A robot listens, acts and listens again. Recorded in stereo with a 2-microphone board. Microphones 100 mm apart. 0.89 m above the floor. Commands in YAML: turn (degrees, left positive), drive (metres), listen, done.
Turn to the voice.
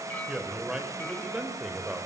turn: -30
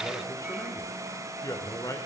turn: 35
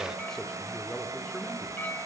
listen: true
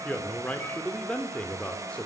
turn: 10
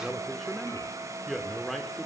done: "Facing the man speaking, 2 to 4 m away."